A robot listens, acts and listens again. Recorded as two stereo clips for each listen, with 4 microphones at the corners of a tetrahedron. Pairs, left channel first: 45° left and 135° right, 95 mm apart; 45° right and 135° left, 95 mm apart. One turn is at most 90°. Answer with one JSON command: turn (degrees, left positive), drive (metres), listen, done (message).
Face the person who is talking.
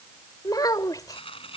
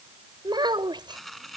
{"turn": 90}
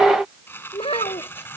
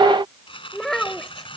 {"turn": 40}
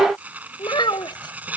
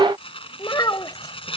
{"done": "Found it: a child speaking, straight ahead."}